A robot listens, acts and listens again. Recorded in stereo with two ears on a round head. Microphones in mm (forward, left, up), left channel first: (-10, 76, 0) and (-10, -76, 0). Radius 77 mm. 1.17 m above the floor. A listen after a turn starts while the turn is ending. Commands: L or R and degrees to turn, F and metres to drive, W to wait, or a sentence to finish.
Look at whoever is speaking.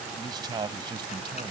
R30
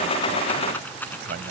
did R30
W
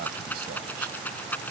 W
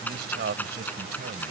R110
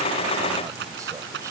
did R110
W
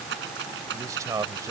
R20
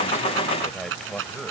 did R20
Found it: a man speaking, straight ahead.